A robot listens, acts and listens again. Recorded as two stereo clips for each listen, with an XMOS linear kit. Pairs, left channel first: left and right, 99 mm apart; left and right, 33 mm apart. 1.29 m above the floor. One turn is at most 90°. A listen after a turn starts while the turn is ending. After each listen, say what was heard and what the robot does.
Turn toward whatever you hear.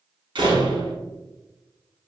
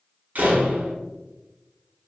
The door slam: about 55° right or 125° right. Turn 55° right.
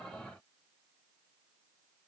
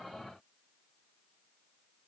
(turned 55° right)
Keep listening.
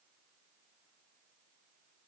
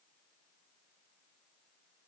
I heard a door slam, but can't make it out now. It was about straight ahead or 70° right.